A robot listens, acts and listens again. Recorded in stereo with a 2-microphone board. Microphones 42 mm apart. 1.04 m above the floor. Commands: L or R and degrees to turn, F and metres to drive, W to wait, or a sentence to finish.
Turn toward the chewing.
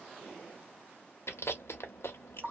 L90
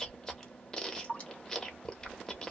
L15
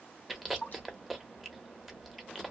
Found it: chewing, straight ahead.